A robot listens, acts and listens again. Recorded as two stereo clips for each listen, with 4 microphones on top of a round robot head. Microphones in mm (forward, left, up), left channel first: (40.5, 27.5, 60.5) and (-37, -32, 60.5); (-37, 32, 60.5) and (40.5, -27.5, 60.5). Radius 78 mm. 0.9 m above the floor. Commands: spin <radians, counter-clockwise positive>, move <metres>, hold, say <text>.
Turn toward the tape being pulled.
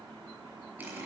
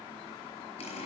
hold
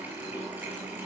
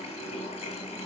hold
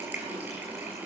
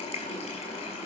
say I can't make out tape being pulled to turn to.